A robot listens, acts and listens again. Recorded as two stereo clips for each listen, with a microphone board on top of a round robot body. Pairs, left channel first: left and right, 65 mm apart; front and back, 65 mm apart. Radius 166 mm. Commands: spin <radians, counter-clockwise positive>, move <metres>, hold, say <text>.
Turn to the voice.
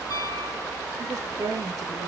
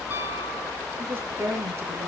spin -2.36
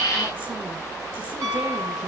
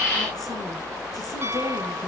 hold
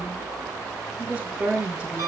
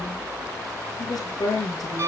spin -0.35
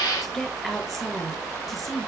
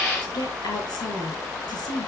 say Facing the woman speaking.